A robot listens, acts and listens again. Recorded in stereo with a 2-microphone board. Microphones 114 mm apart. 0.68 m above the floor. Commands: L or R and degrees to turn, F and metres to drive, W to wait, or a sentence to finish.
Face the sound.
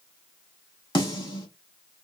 L40
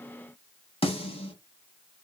L90
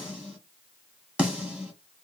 R10
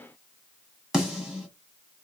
Found it: a snare drum, straight ahead.